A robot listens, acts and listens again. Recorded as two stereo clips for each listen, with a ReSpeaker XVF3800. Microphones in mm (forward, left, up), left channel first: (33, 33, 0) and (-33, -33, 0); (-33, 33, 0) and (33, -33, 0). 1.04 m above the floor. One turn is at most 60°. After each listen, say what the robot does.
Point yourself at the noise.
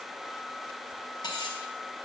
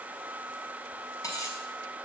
Turn 60° left.
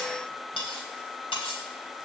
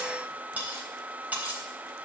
Turn 30° left.
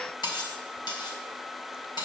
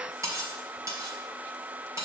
Turn 10° left.
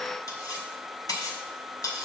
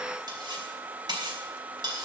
Facing the cutlery clinking, 2 to 4 m away.